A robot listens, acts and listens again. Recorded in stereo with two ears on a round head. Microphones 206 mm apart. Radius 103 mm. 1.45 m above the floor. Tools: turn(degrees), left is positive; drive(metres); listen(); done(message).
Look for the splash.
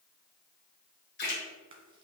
turn(degrees=45)
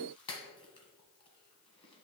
listen()
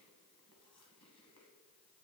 done("I heard a splash, but can't make it out now. It was about straight ahead or 90° left.")